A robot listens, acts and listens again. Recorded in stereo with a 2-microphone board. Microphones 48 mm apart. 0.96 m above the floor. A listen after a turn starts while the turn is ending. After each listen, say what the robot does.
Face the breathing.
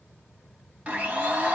Keep listening.
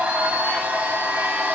Keep listening.
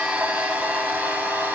I can't make out breathing to turn to.